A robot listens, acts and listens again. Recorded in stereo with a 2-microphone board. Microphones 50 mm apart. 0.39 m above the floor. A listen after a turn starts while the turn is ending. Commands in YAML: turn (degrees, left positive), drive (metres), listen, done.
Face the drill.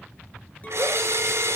turn: -65
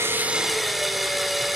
done: "Facing the drill, 2 to 4 m away."